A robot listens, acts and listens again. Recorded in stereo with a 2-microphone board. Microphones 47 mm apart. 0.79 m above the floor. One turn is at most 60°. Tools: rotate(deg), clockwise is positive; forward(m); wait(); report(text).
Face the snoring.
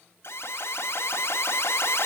wait()
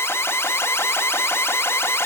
wait()
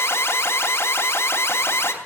report("I can't make out snoring, only an alarm.")